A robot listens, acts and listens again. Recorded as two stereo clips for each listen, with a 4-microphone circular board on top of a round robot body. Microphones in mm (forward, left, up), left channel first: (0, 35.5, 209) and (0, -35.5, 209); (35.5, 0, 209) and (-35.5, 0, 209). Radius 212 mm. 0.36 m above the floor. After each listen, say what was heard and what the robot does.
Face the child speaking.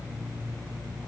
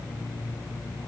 Keep listening.
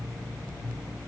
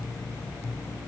Keep listening.
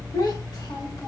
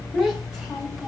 The child speaking: 95° left. Turn 95° left.
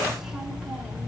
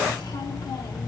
Keep listening.
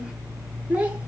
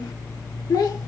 The child speaking is now 20° right. Turn 20° right.
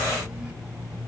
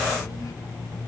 Keep listening.
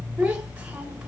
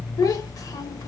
The child speaking is now 15° right. Turn 15° right.
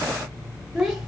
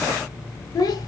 Found it: a child speaking, straight ahead, 1 to 2 m away.